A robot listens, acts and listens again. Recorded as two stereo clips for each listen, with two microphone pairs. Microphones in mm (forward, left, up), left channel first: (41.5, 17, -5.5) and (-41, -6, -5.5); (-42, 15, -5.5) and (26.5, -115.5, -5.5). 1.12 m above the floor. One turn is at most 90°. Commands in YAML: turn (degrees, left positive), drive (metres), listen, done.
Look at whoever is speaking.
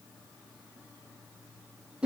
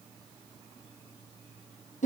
listen: true
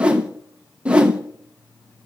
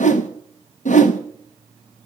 listen: true
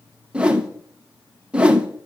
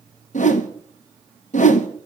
done: "I can't make out anyone speaking, only a whoosh."